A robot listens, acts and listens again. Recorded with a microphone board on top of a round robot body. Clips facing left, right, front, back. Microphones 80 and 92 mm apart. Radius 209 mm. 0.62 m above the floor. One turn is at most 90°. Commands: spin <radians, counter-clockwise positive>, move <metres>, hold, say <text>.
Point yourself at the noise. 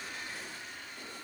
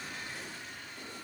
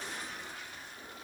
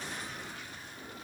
hold
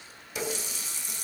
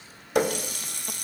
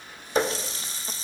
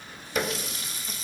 spin -1.05
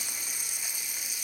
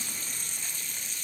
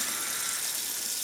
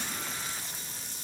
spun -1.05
spin 0.17
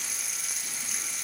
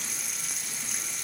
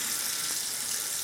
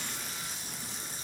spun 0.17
say Facing the running tap, 1 to 2 m away.